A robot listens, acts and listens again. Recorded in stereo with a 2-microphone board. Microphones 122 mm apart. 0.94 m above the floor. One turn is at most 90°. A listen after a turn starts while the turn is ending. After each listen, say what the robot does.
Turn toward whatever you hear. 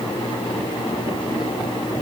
Keep listening.
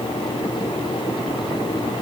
Keep listening.
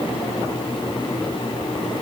I can't make out anything to turn to.